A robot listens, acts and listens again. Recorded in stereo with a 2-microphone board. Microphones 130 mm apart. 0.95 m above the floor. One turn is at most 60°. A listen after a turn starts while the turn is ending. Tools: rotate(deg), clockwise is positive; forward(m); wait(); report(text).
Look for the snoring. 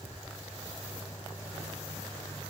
wait()
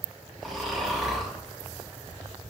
rotate(-30)
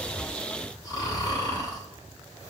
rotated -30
rotate(-60)
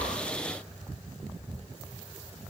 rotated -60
rotate(-60)
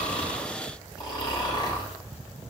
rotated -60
rotate(-35)
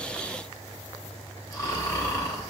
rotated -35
rotate(-25)
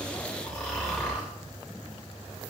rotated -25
rotate(-10)
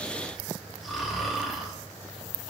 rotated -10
report("Found it: snoring, straight ahead.")